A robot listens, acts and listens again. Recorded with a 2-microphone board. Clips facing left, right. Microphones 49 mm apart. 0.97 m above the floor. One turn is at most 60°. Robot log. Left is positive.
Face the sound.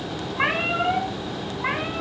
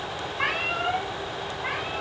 note: The cat meowing: about 25° left or 155° left.
cmd yaw +25
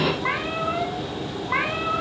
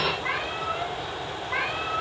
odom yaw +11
note: The cat meowing: about 25° left or 155° left.
cmd yaw +25
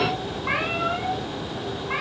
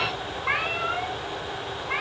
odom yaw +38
end: Found it: a cat meowing, straight ahead.